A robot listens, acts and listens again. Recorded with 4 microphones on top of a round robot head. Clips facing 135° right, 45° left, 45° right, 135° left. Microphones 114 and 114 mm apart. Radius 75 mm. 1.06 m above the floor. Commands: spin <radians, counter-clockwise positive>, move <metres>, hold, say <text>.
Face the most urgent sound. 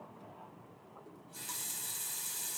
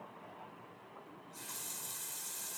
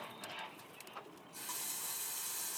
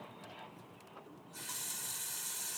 hold
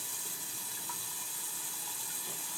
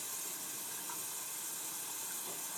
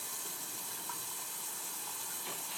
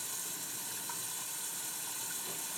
hold
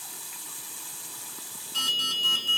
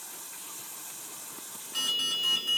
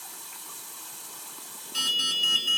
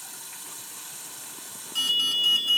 spin -1.05
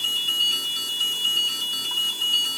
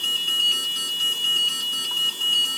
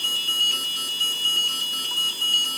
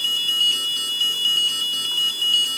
say Facing the alarm.